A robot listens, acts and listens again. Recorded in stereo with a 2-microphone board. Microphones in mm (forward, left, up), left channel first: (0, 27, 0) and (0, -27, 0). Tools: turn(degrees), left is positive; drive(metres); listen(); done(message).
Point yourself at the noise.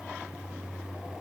listen()
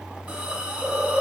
turn(degrees=-25)
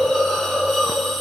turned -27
done("Facing the hiss, under 1 m away.")